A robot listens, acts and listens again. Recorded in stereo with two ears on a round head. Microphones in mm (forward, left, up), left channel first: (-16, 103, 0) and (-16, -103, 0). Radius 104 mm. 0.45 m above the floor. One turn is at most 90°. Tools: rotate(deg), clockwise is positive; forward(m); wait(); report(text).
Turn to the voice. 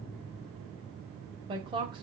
rotate(20)
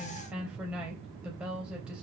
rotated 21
report("Found it: a woman speaking, straight ahead.")